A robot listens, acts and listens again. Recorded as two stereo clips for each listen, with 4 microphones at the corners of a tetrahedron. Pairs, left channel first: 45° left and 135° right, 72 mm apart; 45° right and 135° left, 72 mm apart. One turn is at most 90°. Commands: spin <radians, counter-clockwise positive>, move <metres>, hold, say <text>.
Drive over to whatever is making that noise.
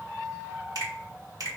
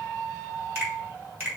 spin -1.57
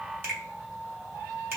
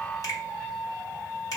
spin -1.40
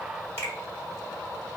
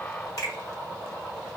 spin -0.17
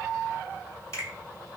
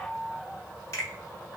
move 1.0
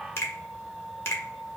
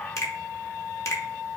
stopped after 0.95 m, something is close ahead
say Arrived at the finger snap, straight ahead.